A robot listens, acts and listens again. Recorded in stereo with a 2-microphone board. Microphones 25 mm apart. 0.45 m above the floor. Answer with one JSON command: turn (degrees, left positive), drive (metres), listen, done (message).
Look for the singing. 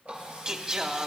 {"turn": -30}
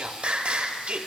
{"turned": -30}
{"turn": -115}
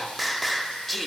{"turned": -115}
{"done": "Found it: singing, straight ahead."}